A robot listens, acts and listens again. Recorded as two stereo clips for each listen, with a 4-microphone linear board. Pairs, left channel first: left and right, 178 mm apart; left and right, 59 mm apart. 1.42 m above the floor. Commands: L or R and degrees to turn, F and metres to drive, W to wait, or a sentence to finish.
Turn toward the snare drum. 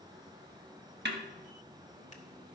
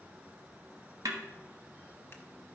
R70
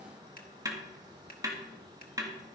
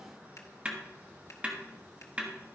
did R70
R20
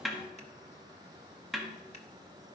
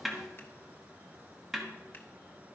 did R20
Found it: a snare drum, straight ahead, 1 to 2 m away.